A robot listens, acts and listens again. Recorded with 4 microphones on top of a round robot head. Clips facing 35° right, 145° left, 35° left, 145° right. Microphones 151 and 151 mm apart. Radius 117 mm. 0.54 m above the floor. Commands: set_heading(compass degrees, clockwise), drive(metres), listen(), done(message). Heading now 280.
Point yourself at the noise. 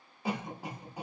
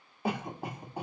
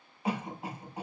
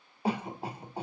set_heading(115)
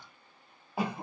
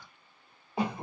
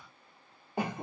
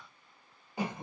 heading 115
set_heading(65)
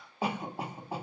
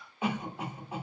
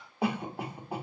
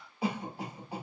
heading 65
set_heading(50)
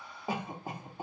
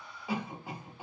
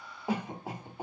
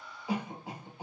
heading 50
done("Found it: a cough, straight ahead.")